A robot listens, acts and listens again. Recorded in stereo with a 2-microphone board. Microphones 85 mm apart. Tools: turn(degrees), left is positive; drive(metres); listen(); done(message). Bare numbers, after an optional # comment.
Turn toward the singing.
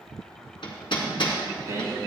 # The singing: about 35° right or 145° right.
turn(-35)
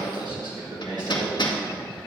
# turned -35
# So it is at 125° right.
turn(-125)
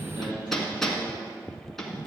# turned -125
# The singing is now 70° right.
turn(-70)
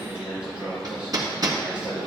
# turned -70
# The singing is now 15° right.
turn(-15)
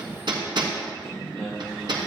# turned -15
done("Found it: singing, straight ahead, over 4 m away.")